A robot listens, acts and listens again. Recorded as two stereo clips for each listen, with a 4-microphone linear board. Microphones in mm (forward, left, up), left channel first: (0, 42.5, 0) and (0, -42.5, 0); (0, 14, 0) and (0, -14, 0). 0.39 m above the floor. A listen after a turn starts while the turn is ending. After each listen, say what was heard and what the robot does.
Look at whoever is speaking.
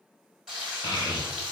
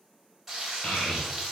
The child speaking: about 50° left or 130° left. Turn 50° left.
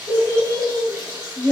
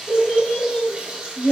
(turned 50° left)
So it is at 30° left. Turn 30° left.
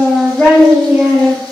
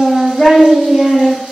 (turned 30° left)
The child speaking is now 10° right. Turn 10° right.
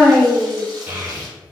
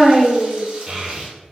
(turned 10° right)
The child speaking is now 25° right. Turn 25° right.
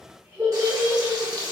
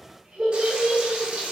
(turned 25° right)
The child speaking is now 30° right. Turn 30° right.
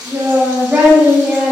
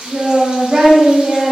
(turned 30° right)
The child speaking is now 15° right. Turn 15° right.
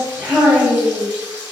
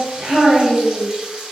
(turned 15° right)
Found it: a child speaking, straight ahead.